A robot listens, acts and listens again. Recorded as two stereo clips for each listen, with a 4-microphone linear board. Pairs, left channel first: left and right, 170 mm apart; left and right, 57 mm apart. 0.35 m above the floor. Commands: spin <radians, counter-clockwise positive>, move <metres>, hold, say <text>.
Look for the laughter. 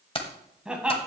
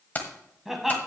spin -0.52
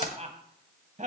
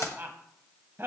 spin -2.36
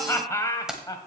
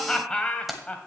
spin 0.44
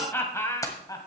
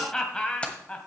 spin 0.35
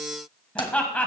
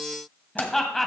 spin 0.17
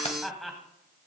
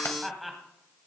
say Found it: laughter, straight ahead, 1 to 2 m away.